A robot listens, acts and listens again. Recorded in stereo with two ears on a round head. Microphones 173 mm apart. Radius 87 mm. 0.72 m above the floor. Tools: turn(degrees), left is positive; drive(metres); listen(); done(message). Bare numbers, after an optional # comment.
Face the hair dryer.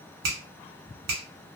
listen()
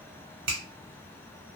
listen()
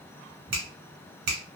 done("I can't make out a hair dryer to turn to.")